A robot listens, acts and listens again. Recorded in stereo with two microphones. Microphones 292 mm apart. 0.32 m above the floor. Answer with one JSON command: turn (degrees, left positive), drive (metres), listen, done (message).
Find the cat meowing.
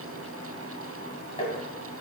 {"listen": true}
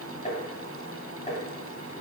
{"listen": true}
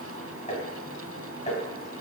{"done": "I can't make out a cat meowing to turn to."}